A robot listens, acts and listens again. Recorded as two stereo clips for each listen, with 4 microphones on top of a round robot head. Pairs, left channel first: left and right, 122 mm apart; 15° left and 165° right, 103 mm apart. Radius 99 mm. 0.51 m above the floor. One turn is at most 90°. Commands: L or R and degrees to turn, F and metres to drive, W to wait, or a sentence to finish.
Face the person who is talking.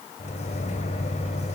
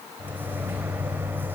W
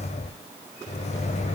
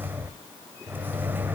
W
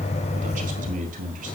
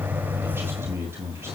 R90
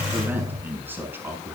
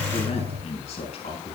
R15
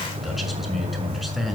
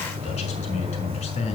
Found it: a man speaking, straight ahead, over 4 m away.